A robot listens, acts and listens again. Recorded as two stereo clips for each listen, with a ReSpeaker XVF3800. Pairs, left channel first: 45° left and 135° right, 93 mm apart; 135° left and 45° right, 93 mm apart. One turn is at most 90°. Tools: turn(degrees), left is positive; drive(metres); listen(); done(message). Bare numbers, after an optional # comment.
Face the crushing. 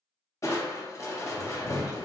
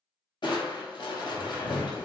# The crushing: 100° left.
turn(90)
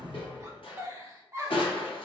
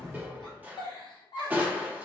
# The crushing is now 25° left.
turn(25)
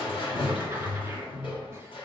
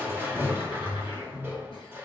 # The crushing is now 20° left.
turn(20)
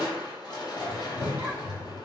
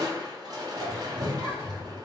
done("Found it: crushing, straight ahead, under 1 m away.")